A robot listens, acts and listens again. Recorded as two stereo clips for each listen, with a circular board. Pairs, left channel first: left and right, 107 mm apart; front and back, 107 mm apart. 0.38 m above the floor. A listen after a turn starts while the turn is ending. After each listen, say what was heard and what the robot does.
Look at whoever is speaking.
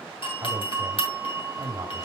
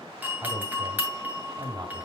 The man speaking: 140° right. Turn 140° right.
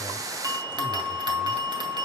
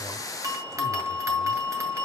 Keep listening.
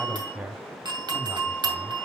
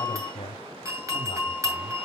The man speaking is now 15° right. Turn 15° right.
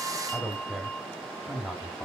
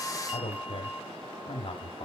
Facing the man speaking.